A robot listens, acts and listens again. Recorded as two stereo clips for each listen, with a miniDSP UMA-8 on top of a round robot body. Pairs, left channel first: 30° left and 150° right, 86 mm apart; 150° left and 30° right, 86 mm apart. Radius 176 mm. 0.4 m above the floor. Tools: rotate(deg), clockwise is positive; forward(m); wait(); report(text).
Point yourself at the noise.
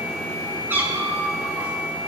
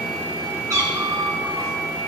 rotate(80)
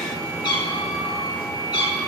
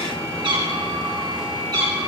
report("Facing the cat meowing.")